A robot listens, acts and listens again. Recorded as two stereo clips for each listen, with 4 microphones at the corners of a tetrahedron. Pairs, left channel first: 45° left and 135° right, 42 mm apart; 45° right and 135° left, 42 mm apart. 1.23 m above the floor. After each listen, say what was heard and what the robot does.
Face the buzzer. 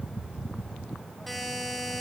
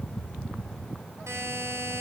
The buzzer: 135° left. Turn 135° left.
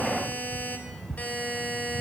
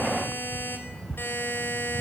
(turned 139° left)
The buzzer is now 10° right. Turn 10° right.
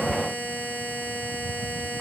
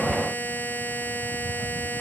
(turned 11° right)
Facing the buzzer.